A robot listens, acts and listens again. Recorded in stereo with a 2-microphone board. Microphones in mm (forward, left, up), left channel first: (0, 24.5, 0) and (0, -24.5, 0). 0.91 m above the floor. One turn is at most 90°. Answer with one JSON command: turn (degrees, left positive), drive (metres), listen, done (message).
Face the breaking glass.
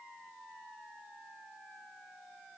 {"listen": true}
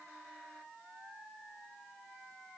{"listen": true}
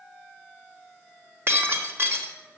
{"turn": -60}
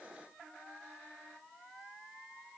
{"listen": true}
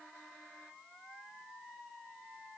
{"done": "I heard breaking glass, but can't make it out now. It was about straight ahead or 60° right."}